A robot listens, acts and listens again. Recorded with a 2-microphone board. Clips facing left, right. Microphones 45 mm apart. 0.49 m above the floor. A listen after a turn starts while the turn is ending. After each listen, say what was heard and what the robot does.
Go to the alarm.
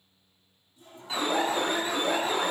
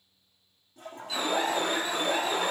The alarm: about 30° left or 150° left. Turn 30° left.
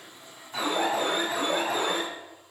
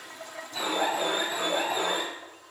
So it is at 115° left. Turn 115° left.
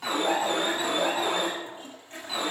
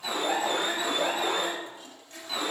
The alarm is now 10° left. Turn 10° left.
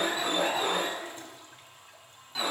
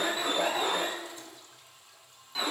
Drive 1.0 m forward.
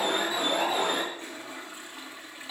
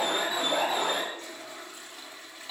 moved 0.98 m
Drive 1.0 m forward.
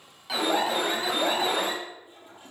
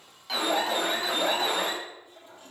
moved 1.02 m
Drive 1.0 m forward.
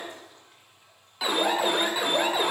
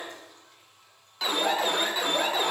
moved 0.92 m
The alarm is now 10° left. Turn 10° left.
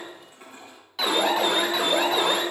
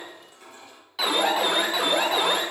Drive 1.0 m forward.
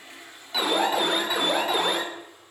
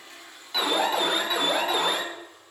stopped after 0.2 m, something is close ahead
Arrived at the alarm, straight ahead.